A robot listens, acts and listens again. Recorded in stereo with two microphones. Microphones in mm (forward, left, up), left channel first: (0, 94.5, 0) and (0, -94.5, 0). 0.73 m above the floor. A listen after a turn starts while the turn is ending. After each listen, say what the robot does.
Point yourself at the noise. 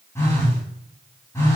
Turn 30° left.
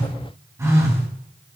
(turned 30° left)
Turn 15° right.
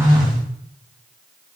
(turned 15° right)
Facing the phone buzzing, 2 to 4 m away.